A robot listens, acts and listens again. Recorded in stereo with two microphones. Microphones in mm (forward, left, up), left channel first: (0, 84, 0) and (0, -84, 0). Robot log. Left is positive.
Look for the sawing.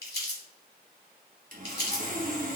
note: The sawing: about 55° right or 125° right.
cmd yaw -55
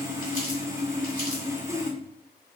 note: So it is at 20° right.
cmd yaw -20
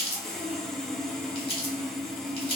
end: Facing the sawing, under 1 m away.